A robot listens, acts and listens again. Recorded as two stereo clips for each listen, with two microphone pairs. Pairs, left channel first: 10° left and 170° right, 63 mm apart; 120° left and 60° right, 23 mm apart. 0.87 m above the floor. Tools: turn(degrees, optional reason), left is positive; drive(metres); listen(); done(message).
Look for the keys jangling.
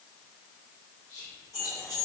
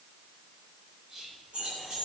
turn(degrees=-15, reason="The keys jangling: 15° right.")
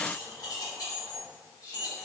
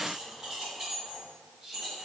turn(degrees=20, reason="The keys jangling is now 20° left.")
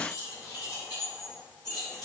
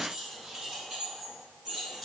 turn(degrees=15, reason="The keys jangling is now 15° left.")
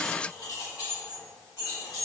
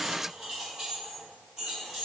turn(degrees=10, reason="The keys jangling is now 10° left.")
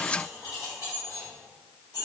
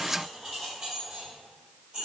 done("Facing the keys jangling.")